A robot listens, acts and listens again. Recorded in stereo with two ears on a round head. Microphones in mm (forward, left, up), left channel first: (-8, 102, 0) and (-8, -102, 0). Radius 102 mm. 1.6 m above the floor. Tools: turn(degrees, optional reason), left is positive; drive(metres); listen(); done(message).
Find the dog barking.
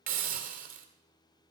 listen()
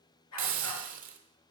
turn(degrees=90)
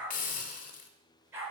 turn(degrees=-10, reason="So it is at 10° right.")
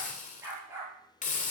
turn(degrees=-10, reason="The dog barking is now 10° right.")
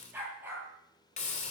done("Found it: a dog barking, straight ahead, over 4 m away.")